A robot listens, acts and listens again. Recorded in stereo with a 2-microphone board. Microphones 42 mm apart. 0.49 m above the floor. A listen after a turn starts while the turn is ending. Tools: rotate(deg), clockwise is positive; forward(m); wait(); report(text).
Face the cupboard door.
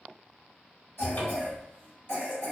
rotate(-45)
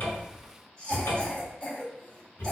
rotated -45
rotate(-90)
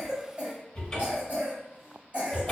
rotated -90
rotate(-20)
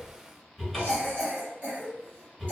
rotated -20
report("Found it: a cupboard door, straight ahead.")